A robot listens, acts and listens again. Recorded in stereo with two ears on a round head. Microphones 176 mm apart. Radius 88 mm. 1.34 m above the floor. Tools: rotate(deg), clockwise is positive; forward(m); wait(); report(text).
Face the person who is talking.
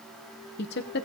rotate(-55)
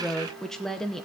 report("Found it: a woman speaking, straight ahead.")